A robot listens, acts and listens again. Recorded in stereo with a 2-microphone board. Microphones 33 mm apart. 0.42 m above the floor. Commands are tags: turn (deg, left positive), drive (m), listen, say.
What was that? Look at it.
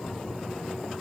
<listen/>
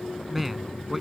<turn deg="-30"/>
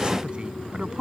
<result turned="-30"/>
<turn deg="-150"/>
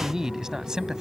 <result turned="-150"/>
<turn deg="-20"/>
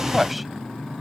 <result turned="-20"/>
<say>Found it: a man speaking, straight ahead.</say>